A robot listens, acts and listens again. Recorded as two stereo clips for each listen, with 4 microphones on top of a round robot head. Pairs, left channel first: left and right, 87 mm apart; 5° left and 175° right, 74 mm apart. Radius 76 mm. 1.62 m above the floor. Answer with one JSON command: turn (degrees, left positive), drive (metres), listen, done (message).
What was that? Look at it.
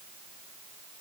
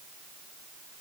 {"listen": true}
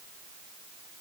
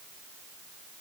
{"listen": true}
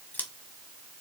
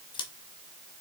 {"turn": 20}
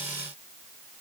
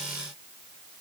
{"listen": true}
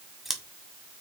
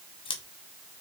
{"done": "Facing the scissors, 1 to 2 m away."}